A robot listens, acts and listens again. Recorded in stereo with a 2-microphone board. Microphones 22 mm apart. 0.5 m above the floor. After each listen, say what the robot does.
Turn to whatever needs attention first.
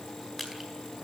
Keep listening.
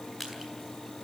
Keep listening.
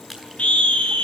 Turn 65° left.
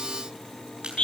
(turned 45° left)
Turn 65° left.
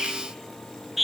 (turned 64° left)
Found it: a scream, straight ahead, over 4 m away.